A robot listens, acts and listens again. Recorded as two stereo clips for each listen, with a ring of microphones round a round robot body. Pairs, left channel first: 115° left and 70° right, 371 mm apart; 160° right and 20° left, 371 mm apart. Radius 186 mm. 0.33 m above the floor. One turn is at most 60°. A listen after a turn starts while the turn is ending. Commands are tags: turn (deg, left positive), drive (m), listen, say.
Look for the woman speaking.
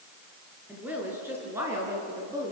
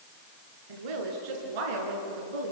<turn deg="10"/>
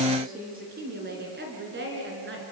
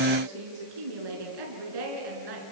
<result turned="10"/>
<say>Found it: a woman speaking, straight ahead.</say>